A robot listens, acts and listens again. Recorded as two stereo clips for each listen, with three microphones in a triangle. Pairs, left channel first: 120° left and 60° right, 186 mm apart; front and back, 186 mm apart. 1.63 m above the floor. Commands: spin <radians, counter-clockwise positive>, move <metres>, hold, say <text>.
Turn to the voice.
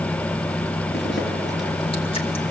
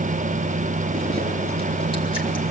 hold
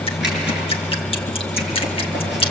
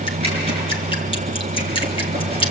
hold
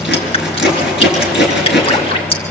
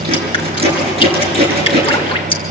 say I can't make out anyone speaking to turn to.